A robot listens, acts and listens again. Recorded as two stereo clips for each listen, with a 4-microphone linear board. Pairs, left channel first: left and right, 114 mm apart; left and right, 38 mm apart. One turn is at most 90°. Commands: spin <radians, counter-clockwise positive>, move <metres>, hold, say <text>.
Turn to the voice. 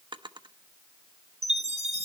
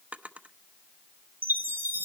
hold
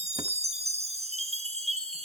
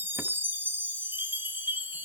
hold
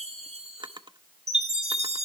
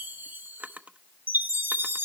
say I can't make out anyone speaking to turn to.